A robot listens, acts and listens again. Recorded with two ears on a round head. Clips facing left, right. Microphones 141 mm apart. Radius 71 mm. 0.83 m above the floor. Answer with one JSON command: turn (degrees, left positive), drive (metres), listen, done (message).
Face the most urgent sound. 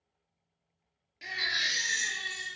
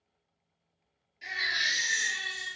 {"turn": 70}
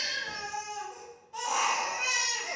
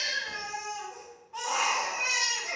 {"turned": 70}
{"turn": 30}
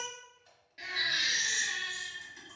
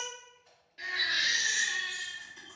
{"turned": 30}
{"turn": 15}
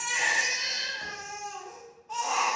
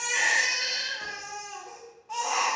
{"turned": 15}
{"done": "Facing the baby crying."}